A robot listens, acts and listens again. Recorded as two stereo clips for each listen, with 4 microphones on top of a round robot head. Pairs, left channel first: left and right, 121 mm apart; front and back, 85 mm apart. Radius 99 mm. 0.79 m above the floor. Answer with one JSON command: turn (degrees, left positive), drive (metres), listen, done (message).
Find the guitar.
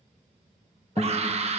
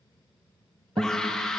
{"turn": 155}
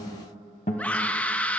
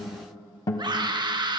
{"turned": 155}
{"turn": 45}
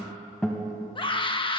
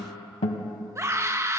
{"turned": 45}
{"done": "Facing the guitar, 1 to 2 m away."}